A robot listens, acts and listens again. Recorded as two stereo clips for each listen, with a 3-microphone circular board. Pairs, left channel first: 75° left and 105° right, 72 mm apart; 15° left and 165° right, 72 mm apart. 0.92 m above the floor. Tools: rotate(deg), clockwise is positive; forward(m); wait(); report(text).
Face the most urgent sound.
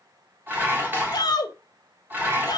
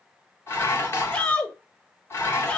rotate(-90)
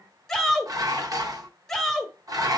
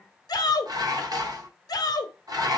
rotate(10)
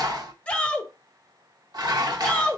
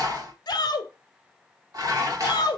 report("Found it: a shout, straight ahead, 1 to 2 m away.")